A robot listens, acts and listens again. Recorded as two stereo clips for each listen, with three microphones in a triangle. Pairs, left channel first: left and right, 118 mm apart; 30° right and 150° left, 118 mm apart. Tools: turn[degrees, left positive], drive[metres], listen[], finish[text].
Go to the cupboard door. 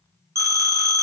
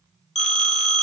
Action: listen[]
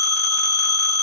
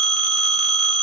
Action: listen[]
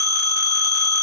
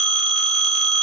Action: finish[I can't make out a cupboard door to turn to.]